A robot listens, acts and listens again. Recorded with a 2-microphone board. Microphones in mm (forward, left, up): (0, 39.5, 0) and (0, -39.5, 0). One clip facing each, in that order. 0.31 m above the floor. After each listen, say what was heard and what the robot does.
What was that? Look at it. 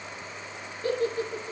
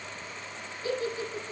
The giggle: about 55° left or 125° left. Turn 55° left.
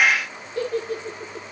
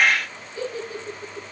So it is at 75° left. Turn 75° left.
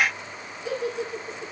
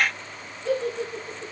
Found it: a giggle, straight ahead, over 4 m away.